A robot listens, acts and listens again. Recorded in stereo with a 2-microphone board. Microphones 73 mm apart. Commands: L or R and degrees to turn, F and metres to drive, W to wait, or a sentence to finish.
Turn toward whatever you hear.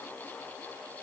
W
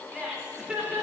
R30
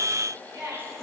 R135
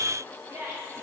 R40
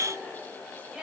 Found it: laughter, straight ahead, over 4 m away.